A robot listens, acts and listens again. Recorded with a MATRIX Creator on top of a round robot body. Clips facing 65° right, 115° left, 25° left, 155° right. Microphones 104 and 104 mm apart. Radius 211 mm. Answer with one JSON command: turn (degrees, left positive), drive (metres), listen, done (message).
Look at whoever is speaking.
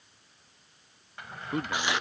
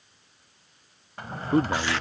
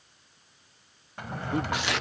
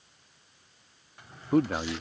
{"turn": 165}
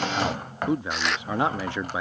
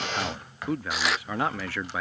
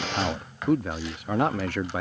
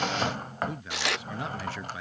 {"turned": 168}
{"done": "Found it: a man speaking, straight ahead."}